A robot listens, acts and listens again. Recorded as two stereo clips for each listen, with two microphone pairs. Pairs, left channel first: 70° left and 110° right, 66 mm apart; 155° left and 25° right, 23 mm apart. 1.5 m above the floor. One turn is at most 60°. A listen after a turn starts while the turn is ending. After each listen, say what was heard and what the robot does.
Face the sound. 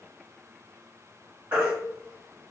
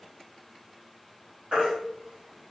The baby crying: 50° right. Turn 50° right.
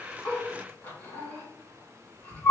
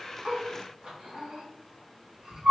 The baby crying is now 15° left. Turn 15° left.
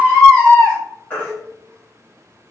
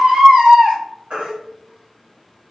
Facing the baby crying.